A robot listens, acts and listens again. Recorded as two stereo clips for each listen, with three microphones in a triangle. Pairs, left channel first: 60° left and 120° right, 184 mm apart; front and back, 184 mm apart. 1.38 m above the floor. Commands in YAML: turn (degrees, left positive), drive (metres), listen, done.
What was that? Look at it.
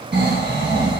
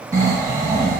turn: -110
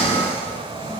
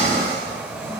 done: "Found it: snoring, straight ahead."